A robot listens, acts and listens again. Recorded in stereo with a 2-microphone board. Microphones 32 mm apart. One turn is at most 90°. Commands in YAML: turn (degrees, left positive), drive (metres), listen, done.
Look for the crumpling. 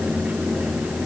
listen: true
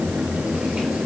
listen: true
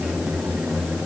done: "I can't make out crumpling to turn to."